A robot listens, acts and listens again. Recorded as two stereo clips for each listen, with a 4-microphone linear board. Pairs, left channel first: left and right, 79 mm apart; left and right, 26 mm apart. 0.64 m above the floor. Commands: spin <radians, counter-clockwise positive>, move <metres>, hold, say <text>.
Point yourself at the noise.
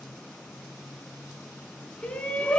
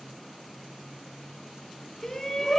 spin 0.35
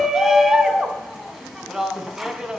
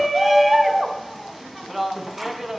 say Found it: a shout, straight ahead, over 4 m away.